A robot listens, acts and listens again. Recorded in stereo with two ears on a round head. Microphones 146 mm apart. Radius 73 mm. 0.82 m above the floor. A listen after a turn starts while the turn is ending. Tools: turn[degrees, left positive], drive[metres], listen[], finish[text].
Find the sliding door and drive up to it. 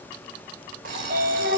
Thought: The sliding door: about 65° right or 115° right.
Action: turn[-65]
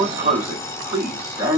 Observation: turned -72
Thought: So it is at 15° right.
Action: turn[-15]
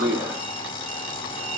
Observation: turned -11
Action: drive[1.0]
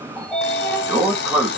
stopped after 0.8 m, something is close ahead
Action: finish[Arrived at the sliding door, straight ahead.]